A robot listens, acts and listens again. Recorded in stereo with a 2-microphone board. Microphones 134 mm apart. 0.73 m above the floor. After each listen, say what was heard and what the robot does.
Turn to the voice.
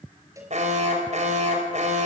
Keep listening.
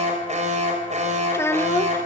The child speaking: about 20° left or 160° left. Turn 20° left.
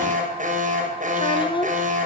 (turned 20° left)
So it is at 140° left. Turn 140° left.
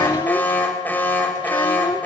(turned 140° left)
The child speaking is now 35° left. Turn 35° left.
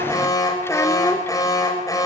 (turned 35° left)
Keep listening.
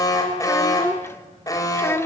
The child speaking is now 20° left. Turn 20° left.
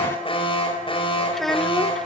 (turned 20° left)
Found it: a child speaking, straight ahead.